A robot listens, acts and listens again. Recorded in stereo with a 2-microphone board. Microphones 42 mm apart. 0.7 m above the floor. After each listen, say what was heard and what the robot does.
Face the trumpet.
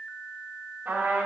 The trumpet: about 50° right or 130° right. Turn 50° right.
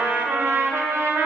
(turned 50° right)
So it is at 85° right. Turn 85° right.
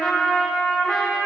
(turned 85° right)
The trumpet is now 15° left. Turn 15° left.
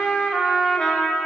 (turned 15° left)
Facing the trumpet, under 1 m away.